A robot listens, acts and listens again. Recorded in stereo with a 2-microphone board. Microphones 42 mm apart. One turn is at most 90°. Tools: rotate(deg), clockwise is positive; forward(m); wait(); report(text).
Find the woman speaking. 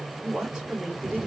rotate(30)
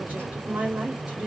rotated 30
rotate(90)
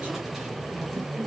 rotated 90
rotate(40)
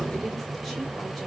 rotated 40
wait()
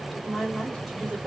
report("Found it: a woman speaking, straight ahead, 2 to 4 m away.")